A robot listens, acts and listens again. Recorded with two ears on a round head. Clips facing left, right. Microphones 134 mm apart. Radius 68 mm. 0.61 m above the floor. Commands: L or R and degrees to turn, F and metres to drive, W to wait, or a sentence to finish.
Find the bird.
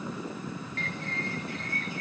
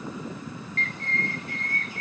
L90
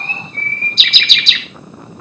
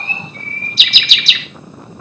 Facing the bird.